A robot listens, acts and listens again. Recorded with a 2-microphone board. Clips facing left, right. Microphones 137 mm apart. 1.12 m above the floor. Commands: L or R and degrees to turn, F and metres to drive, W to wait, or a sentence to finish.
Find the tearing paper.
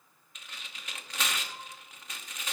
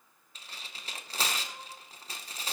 R35
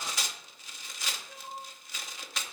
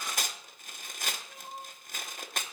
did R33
R105
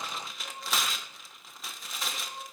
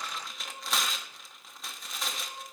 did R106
Found it: tearing paper, straight ahead, under 1 m away.